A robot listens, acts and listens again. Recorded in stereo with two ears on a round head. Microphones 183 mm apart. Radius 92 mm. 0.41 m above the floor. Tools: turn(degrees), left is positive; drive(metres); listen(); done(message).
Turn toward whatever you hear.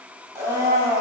turn(degrees=-15)
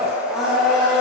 done("Found it: a blender, straight ahead, under 1 m away.")